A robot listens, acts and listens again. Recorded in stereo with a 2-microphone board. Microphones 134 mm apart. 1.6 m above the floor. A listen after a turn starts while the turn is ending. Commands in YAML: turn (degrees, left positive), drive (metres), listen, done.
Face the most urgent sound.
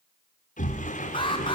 turn: 40
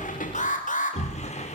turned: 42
turn: 100
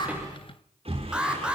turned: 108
done: "Facing the alarm, 2 to 4 m away."